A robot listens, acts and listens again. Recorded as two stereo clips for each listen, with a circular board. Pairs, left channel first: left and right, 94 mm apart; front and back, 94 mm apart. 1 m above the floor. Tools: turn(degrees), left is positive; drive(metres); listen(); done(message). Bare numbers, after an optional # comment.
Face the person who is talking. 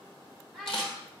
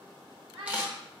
# The child speaking: straight behind.
turn(180)
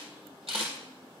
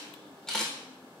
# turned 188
listen()
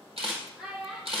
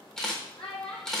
done("Found it: a child speaking, straight ahead, 2 to 4 m away.")